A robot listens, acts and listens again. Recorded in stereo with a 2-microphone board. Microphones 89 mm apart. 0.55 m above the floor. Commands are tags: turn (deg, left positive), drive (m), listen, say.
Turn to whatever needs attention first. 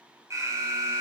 <turn deg="-40"/>
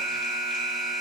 <say>Found it: an alarm, straight ahead.</say>